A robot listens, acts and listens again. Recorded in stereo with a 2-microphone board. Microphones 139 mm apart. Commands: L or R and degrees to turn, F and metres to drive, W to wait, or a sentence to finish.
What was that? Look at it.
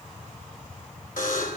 L90
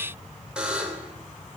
Found it: a buzzer, straight ahead.